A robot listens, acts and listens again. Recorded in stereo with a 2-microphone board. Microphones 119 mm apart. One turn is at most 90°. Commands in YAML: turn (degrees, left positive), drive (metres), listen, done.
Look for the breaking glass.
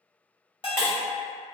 turn: 25
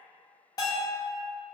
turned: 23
listen: true
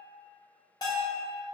done: "I heard breaking glass, but can't make it out now. It was about straight ahead or 135° left."